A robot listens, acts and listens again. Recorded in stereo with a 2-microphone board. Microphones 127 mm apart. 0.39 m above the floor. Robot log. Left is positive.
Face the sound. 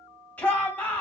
cmd yaw +30
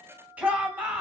note: So it is at 15° right.
cmd yaw -15
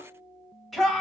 end: Found it: a shout, straight ahead, 1 to 2 m away.